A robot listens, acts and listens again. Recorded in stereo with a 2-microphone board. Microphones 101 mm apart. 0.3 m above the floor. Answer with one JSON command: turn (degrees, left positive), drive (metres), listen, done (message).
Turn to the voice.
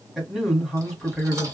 {"turn": -30}
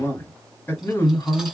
{"turn": 25}
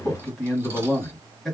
{"done": "Found it: a man speaking, straight ahead."}